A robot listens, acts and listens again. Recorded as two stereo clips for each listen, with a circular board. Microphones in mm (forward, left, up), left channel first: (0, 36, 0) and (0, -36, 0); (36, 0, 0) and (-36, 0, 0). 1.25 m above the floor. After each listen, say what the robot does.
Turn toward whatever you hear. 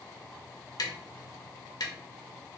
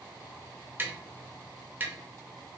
Turn 115° left.
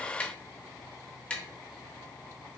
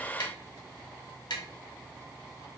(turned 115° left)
Turn 15° left.
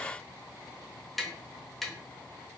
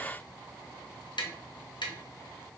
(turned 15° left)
Facing the tapping.